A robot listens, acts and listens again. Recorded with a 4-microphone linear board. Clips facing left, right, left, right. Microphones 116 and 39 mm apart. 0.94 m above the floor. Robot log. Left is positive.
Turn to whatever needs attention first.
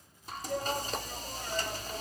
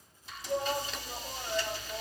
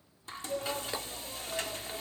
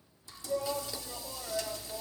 cmd yaw -30
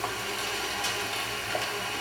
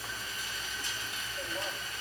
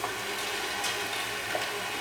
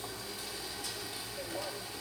cmd idle
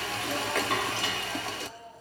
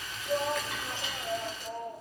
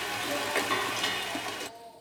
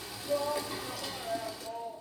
note: So it is at 135° right.
cmd yaw -135
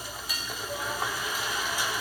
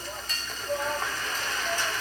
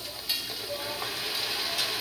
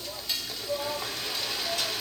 note: The shout is now 40° right.
cmd yaw -40
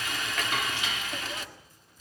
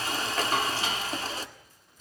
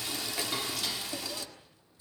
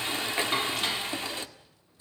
cmd idle
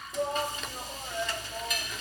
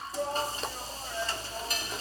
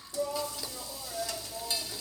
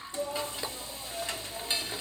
end: Found it: a shout, straight ahead, 2 to 4 m away.